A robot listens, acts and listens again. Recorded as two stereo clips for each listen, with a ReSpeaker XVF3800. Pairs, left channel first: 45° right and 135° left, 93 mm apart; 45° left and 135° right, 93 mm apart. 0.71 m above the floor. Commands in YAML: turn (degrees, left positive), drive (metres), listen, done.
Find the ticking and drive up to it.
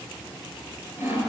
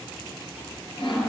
listen: true
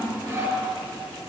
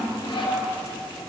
listen: true
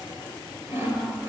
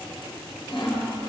done: "I can't make out ticking to turn to."